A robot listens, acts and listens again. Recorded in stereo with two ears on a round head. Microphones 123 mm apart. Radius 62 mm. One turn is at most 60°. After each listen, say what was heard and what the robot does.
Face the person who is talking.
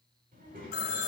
The child speaking: about 60° right or 120° right. Turn 60° right.
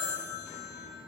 Found it: a child speaking, straight ahead.